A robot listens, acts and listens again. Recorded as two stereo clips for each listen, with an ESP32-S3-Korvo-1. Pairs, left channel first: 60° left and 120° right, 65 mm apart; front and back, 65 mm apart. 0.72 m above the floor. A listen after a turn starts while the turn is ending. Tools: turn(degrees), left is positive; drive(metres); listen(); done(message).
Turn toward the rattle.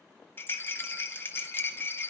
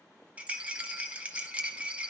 turn(degrees=115)
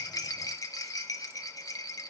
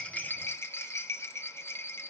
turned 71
turn(degrees=45)
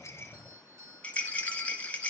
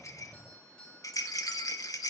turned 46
done("Found it: a rattle, straight ahead.")